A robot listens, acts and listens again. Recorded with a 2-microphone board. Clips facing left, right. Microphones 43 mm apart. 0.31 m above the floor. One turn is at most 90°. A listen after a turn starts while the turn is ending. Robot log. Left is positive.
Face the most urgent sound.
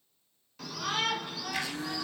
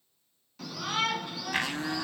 cmd yaw +30
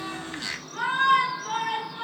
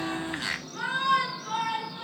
note: So it is at 150° left.
cmd yaw +90
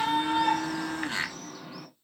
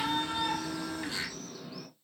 note: The shout is now 80° left.
cmd yaw +80
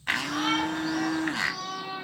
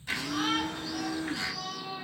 note: The shout is now 40° left.
cmd yaw +40
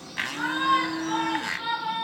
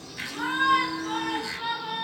note: The shout is now 10° left.
cmd yaw +10
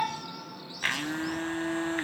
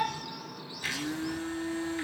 end: Found it: a shout, straight ahead.